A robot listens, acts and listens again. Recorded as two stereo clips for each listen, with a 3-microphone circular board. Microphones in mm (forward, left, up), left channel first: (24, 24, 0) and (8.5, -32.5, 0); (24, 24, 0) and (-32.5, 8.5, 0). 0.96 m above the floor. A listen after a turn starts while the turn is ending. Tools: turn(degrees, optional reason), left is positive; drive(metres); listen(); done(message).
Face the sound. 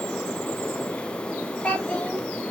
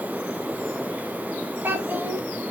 turn(degrees=140, reason="The child speaking: 140° left.")
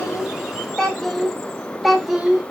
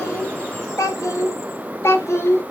turn(degrees=-25, reason="The child speaking is now 25° right.")
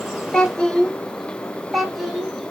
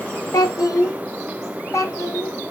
turn(degrees=-15, reason="The child speaking is now 15° right.")
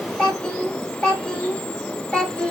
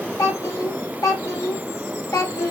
done("Facing the child speaking.")